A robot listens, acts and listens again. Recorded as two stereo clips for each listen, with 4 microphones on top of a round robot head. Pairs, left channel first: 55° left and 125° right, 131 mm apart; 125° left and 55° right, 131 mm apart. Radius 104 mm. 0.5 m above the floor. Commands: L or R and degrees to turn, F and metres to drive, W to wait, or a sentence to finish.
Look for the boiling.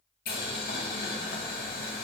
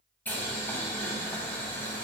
L50
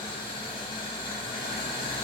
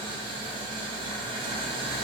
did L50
Facing the boiling, under 1 m away.